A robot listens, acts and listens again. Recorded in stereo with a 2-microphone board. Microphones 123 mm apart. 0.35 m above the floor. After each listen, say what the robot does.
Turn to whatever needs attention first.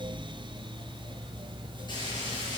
Keep listening.
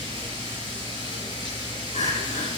Turn 70° left.
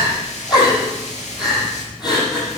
Turn 35° left.
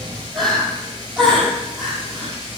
Facing the crying.